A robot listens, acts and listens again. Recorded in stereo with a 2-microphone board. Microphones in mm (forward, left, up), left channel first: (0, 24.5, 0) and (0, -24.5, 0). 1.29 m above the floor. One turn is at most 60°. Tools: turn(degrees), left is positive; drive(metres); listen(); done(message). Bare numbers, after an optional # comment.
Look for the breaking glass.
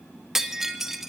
turn(-30)
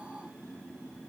listen()
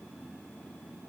done("I heard breaking glass, but can't make it out now. It was about 20° left or 140° right.")